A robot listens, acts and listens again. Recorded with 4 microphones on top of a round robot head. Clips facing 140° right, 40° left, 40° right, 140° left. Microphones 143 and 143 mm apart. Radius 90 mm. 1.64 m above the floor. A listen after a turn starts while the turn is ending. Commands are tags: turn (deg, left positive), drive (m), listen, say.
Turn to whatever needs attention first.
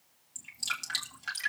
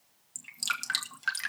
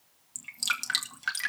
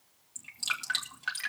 <listen/>
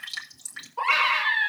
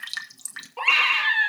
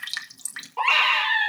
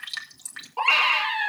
<turn deg="55"/>
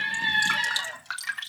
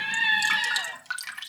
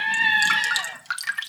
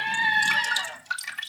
<turn deg="10"/>
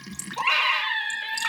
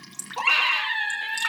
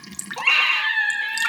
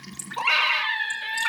<say>Found it: a scream, straight ahead, over 4 m away.</say>